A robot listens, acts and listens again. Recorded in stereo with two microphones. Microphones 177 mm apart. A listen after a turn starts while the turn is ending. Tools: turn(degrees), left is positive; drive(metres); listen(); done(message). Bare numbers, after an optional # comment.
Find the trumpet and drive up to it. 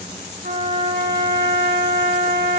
# The trumpet: about 65° right or 115° right.
turn(-65)
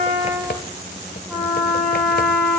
drive(1.0)
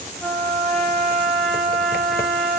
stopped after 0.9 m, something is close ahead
done("Something is in my way. I am facing the trumpet but have not reached it.")